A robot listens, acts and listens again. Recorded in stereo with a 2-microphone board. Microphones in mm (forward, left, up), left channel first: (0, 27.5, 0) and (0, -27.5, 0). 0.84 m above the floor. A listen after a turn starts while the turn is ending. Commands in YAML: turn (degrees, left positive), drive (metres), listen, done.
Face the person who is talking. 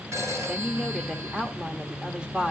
turn: -15
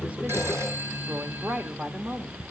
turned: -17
turn: -150
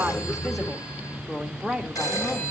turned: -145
done: "Facing the woman speaking."